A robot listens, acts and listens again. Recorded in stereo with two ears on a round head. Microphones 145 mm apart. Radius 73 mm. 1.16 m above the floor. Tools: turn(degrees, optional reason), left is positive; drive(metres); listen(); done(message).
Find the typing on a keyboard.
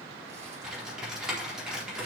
turn(degrees=-30)
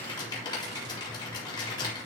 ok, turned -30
turn(degrees=25, reason="So it is at 25° left.")
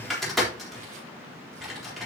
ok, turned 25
done("Facing the typing on a keyboard.")